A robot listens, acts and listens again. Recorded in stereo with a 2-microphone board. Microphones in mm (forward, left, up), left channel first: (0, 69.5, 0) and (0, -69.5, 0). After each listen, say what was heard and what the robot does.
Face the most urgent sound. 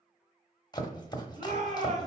The shout: about 55° right or 125° right. Turn 55° right.
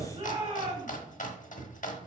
So it is at 60° right. Turn 60° right.
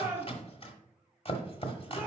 The shout is now 15° right. Turn 15° right.
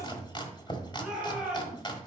Found it: a shout, straight ahead, 2 to 4 m away.